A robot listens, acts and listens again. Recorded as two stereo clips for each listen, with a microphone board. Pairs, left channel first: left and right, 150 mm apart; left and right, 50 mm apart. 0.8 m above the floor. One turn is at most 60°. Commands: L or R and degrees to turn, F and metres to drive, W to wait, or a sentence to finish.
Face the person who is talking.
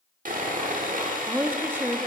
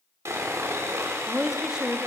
R30
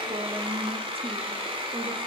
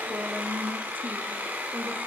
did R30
R60
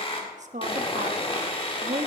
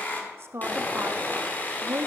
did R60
R60
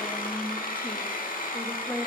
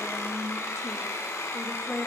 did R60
L10
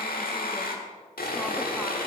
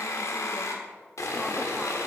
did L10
W
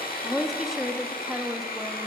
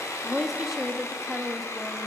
Facing the woman speaking, under 1 m away.